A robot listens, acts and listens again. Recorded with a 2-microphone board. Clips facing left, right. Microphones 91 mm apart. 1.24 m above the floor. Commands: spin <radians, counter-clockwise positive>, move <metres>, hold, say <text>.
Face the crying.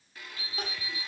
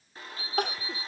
spin -1.22
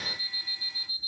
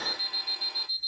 hold
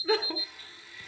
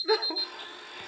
spin -0.17
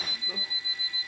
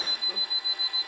hold
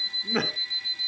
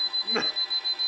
say Found it: crying, straight ahead, 1 to 2 m away.